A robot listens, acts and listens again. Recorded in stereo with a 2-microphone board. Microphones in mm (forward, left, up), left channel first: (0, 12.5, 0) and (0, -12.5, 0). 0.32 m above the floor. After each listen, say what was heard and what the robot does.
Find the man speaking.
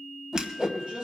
The man speaking: about 50° right or 130° right. Turn 50° right.
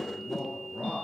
So it is at 75° right. Turn 75° right.
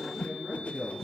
The man speaking is now 10° right. Turn 10° right.
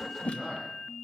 Found it: a man speaking, straight ahead.